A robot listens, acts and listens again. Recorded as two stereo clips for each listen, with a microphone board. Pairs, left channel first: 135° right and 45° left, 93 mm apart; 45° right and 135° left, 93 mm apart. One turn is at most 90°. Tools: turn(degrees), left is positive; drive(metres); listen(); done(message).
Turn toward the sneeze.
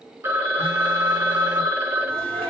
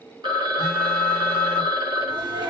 turn(degrees=90)
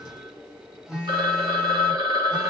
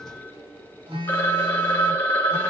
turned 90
turn(degrees=55)
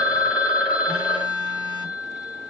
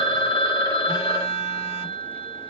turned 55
done("I heard a sneeze from this way, but can't make it out now.")